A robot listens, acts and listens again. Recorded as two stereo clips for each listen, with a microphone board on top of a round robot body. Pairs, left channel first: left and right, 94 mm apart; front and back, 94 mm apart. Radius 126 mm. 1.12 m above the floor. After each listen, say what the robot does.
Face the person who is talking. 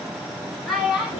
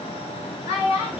Found it: a child speaking, straight ahead, 2 to 4 m away.